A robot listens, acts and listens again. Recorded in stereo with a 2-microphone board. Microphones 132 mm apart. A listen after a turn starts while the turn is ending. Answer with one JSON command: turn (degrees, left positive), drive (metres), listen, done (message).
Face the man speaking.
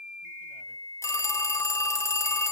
{"listen": true}
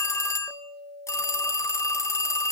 {"listen": true}
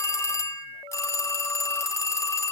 {"done": "I can't make out a man speaking to turn to."}